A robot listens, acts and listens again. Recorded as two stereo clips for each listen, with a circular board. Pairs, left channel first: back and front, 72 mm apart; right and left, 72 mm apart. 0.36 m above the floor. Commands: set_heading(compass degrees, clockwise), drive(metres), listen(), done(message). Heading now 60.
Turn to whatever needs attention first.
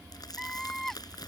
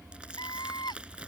set_heading(155)
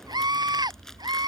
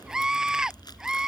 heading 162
set_heading(152)
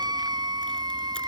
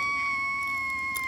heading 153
done("Found it: a scream, straight ahead.")